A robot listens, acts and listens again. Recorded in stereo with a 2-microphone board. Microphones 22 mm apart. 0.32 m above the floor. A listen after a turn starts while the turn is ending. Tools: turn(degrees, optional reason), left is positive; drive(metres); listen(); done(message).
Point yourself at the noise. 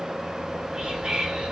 turn(degrees=-40, reason="The whispering: about 40° right or 140° right.")
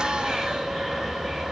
turn(degrees=-10, reason="So it is at 10° right.")
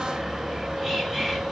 done("Facing the whispering, 1 to 2 m away.")